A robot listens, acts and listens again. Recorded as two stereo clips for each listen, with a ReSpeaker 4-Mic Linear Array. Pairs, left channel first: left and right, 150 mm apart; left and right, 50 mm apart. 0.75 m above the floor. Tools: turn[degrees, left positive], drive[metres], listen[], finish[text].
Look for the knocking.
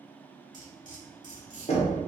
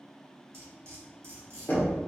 Thought: The knocking: about 45° left or 135° left.
Action: turn[45]
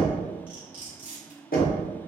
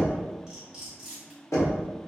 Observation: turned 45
Thought: So it is at 85° left.
Action: turn[85]
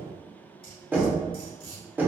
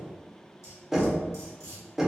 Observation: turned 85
Thought: The knocking is now 15° right.
Action: turn[-15]
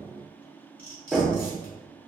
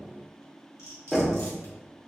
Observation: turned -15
Action: finish[Facing the knocking, under 1 m away.]